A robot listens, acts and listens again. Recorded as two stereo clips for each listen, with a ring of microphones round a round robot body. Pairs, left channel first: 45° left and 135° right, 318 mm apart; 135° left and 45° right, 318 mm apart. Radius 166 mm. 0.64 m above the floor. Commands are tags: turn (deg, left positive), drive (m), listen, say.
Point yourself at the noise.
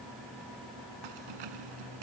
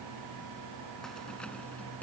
<turn deg="-140"/>
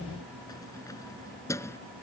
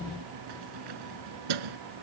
<turn deg="-35"/>
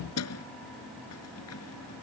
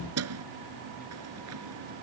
<say>Found it: keys jangling, straight ahead.</say>